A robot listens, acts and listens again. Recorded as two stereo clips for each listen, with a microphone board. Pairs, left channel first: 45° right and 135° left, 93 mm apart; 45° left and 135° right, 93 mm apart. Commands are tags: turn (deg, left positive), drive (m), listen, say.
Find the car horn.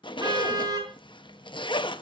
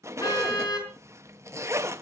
<turn deg="90"/>
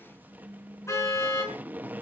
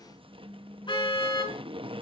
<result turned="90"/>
<turn deg="15"/>
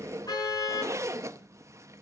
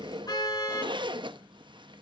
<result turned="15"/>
<say>Found it: a car horn, straight ahead.</say>